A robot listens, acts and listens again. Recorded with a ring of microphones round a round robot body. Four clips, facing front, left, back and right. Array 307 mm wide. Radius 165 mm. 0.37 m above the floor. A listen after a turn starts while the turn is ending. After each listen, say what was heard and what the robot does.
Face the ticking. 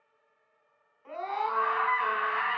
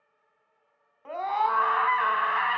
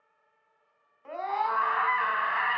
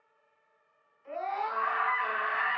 Keep listening.
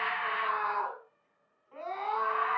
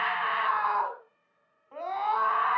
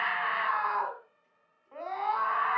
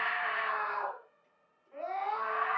Keep listening.
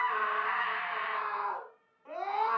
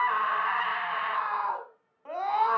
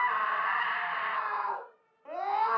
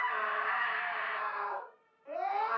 I can't make out ticking, only a scream.